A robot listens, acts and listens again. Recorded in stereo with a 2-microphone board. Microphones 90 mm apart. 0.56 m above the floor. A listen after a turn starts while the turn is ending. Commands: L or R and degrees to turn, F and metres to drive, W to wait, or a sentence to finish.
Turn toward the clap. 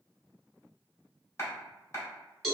L35
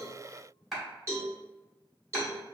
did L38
Found it: a clap, straight ahead.